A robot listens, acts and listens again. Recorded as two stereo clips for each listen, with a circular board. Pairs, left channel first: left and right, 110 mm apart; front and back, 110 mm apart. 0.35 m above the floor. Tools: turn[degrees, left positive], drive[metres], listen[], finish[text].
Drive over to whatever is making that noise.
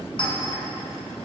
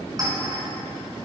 Thought: The clink: 125° left.
Action: turn[125]
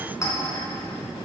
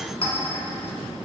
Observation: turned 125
Thought: The clink is now 30° left.
Action: turn[30]
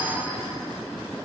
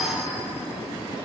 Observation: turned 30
Action: listen[]
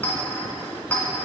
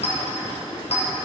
Thought: The clink is now 15° left.
Action: turn[15]
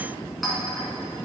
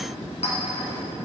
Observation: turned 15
Action: drive[1.0]
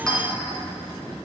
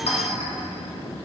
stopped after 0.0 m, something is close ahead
Action: finish[Blocked. The clink is further on, straight ahead.]